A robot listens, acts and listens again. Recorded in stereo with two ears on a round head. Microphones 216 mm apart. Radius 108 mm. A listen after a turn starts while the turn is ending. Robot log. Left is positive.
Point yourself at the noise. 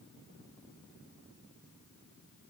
cmd idle
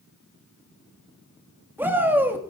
cmd yaw -30
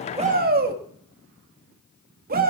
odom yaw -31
note: So it is at 140° right.
cmd yaw -140
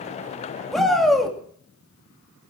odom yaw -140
end: Facing the shout, 2 to 4 m away.